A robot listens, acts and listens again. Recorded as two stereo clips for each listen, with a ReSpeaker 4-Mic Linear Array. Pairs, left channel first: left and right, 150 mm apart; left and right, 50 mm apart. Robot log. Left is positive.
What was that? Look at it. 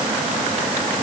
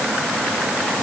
cmd idle
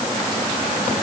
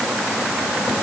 cmd idle
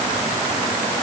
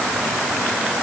end: I can't make out anything.